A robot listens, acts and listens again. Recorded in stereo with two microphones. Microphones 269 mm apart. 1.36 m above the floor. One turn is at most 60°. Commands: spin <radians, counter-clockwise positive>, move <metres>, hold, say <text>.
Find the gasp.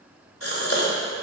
spin 0.96
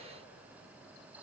hold
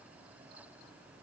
say I heard a gasp, but can't make it out now. It was about straight ahead or 70° left.